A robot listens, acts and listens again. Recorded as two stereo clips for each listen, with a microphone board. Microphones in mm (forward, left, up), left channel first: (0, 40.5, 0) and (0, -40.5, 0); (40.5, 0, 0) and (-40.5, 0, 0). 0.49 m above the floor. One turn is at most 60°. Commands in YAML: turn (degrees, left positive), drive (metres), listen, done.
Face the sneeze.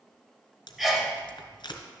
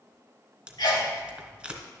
done: "Found it: a sneeze, straight ahead, 1 to 2 m away."